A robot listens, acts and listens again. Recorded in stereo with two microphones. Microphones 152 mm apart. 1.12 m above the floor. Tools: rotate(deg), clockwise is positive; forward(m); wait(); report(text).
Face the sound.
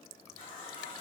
rotate(-35)
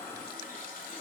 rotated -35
rotate(-110)
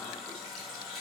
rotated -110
report("Facing the running tap, 1 to 2 m away.")